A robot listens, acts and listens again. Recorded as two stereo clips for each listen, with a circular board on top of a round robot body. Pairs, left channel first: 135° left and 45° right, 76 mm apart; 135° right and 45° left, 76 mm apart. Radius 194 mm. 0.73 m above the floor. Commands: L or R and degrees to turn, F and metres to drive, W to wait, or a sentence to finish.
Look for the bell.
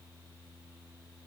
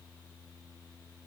W
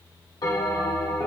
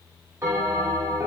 L105
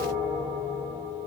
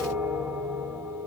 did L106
Found it: a bell, straight ahead, 2 to 4 m away.